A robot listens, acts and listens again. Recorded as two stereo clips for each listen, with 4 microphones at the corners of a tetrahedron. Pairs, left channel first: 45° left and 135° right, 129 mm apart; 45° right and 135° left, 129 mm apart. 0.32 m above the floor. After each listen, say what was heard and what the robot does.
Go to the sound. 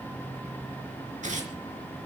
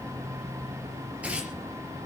The tearing paper: 145° right. Turn 145° right.
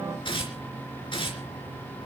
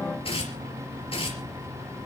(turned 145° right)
Drive 1.0 m forward.
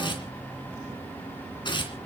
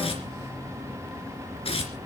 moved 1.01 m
Drive 1.0 m forward.
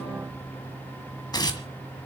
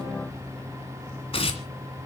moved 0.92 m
The tearing paper is now 10° right. Turn 10° right.
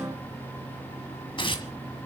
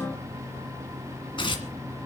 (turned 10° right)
Drive 1.0 m forward.
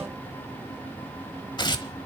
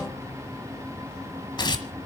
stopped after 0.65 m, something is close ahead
Arrived at the tearing paper, straight ahead.